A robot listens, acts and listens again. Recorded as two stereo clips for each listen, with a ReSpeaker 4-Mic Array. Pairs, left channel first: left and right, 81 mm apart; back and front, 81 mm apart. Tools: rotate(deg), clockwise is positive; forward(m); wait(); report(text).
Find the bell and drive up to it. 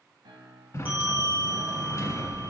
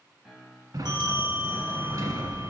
rotate(20)
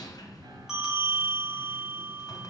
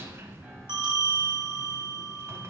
forward(1.0)
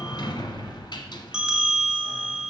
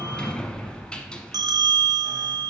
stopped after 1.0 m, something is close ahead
rotate(10)
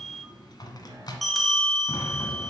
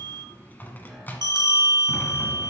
report("Arrived at the bell, straight ahead.")